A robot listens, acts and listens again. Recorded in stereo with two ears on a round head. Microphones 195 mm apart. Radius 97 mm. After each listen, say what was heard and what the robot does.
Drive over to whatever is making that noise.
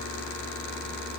Keep listening.
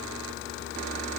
Keep listening.
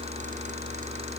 I can't make out anything.